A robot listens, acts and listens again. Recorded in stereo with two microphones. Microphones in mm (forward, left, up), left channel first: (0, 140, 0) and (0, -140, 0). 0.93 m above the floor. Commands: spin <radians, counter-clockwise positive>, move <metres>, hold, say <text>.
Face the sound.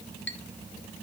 spin 0.70
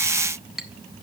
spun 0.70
say Found it: a clink, straight ahead, 1 to 2 m away.